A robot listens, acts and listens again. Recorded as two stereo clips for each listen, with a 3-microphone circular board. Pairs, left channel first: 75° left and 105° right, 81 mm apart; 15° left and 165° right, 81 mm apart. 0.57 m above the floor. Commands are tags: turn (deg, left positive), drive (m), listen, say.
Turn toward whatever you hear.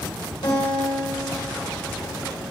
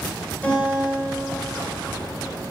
<turn deg="85"/>
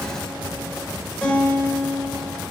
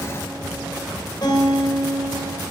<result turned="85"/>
<say>Found it: a guitar, straight ahead.</say>